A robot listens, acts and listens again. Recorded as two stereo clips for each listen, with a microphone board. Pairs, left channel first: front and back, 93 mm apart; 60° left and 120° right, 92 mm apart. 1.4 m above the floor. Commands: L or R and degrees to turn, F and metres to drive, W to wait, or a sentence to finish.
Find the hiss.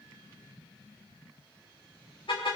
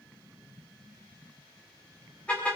W
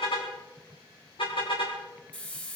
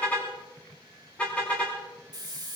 R75
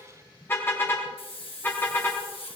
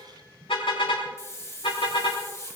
Found it: a hiss, straight ahead, 1 to 2 m away.